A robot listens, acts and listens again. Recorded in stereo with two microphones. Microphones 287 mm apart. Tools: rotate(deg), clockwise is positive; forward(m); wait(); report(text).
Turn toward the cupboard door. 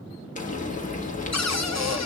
rotate(-65)
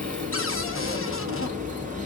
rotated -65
rotate(-50)
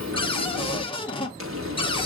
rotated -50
rotate(-20)
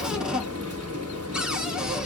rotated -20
report("Found it: a cupboard door, straight ahead.")